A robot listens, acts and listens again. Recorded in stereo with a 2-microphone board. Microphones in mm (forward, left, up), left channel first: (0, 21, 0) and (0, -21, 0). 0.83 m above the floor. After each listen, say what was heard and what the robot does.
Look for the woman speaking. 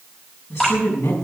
Turn 90° left.
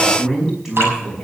Facing the woman speaking, over 4 m away.